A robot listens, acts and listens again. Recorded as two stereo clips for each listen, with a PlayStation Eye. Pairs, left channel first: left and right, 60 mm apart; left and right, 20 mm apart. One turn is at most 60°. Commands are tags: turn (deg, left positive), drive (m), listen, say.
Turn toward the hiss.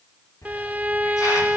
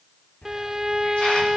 <turn deg="60"/>
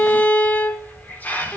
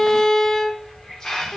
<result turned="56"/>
<turn deg="30"/>
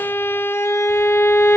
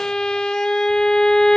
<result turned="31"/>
<listen/>
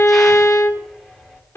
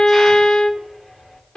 <say>Found it: a hiss, straight ahead.</say>